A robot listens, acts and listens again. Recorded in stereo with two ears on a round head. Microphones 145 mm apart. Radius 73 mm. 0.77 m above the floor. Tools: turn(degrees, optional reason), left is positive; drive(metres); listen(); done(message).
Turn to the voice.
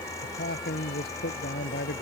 turn(degrees=60, reason="The man speaking: about 60° left or 120° left.")
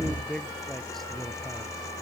done("Found it: a man speaking, straight ahead.")